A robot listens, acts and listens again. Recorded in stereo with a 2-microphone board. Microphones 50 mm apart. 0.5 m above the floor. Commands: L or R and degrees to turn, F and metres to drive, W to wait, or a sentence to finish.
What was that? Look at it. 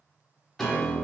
L30
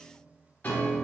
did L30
L145
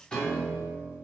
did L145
L20
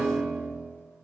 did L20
Found it: a piano, straight ahead.